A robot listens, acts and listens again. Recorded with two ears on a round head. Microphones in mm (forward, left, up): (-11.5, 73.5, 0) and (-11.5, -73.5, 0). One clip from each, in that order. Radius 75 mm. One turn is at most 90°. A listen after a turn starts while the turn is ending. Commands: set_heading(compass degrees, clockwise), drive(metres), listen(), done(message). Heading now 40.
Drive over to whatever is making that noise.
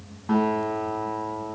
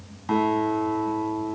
set_heading(130)
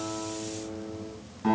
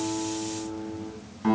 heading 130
drive(1.0)
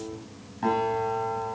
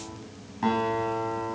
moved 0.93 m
drive(1.0)
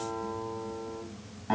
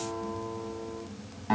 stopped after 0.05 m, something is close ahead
done("Blocked. The guitar is further on, straight ahead.")